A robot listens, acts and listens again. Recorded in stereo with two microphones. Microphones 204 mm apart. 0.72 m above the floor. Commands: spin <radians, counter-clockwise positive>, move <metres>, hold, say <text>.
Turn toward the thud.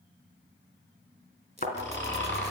spin 0.79
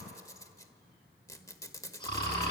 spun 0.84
hold
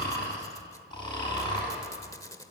say I heard a thud, but can't make it out now. It was about 5° right or 90° left.